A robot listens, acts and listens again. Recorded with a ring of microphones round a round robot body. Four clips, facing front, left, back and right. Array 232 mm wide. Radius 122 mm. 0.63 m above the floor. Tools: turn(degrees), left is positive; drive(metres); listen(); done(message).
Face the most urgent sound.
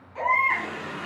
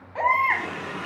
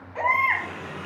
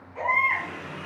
turn(degrees=110)
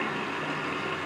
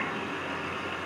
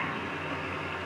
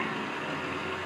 listen()
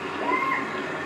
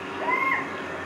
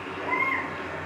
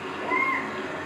turn(degrees=50)
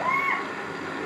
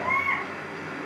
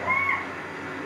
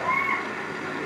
done("Found it: a baby crying, straight ahead.")